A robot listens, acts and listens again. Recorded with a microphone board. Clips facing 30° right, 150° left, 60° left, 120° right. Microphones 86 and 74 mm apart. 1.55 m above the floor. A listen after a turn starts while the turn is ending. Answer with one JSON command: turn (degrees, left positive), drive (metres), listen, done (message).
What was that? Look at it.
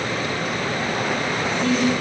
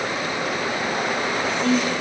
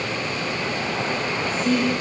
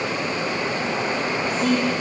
{"turn": -105}
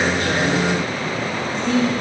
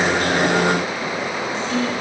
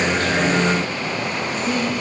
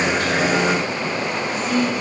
{"turn": 15}
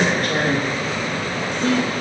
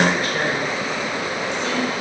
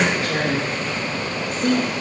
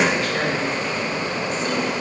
{"turn": 20}
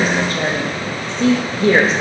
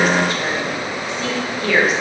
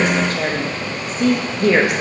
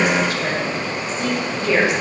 {"turn": 25}
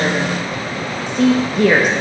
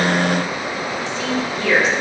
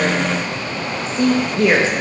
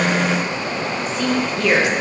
{"done": "Facing the woman speaking, 1 to 2 m away."}